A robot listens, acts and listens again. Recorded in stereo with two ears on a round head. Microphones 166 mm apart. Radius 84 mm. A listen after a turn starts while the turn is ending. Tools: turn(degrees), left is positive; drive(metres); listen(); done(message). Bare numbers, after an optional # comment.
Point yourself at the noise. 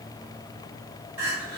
# The crying: about 55° right or 125° right.
turn(-55)
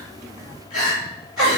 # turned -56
done("Facing the crying.")